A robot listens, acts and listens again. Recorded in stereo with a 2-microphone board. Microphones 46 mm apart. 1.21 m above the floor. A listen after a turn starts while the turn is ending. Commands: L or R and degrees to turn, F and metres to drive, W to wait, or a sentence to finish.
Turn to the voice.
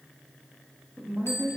R60
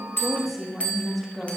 Found it: a woman speaking, straight ahead, 1 to 2 m away.